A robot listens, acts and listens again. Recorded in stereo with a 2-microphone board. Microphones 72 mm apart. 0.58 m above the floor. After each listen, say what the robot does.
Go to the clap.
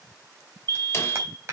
Turn 40° right.
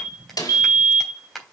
Drive 1.0 m forward.
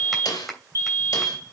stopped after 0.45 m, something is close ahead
Something is in my way. I am facing the clap but have not reached it.